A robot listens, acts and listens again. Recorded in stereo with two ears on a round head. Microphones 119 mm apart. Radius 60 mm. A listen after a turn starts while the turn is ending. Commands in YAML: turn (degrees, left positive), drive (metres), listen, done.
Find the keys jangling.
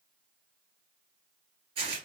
listen: true
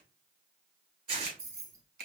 turn: -25
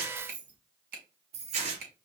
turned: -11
turn: -50
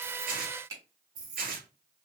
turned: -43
turn: -30
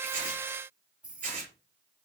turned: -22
turn: -10
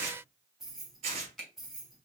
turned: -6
done: "Found it: keys jangling, straight ahead, 1 to 2 m away."